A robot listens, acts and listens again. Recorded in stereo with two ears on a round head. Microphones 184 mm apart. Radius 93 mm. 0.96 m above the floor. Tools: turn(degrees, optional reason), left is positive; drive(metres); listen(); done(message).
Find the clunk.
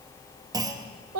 turn(degrees=-20, reason="The clunk: about 20° right or 160° right.")
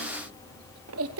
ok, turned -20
listen()
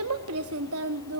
done("I heard a clunk, but can't make it out now. It was about straight ahead or 140° right.")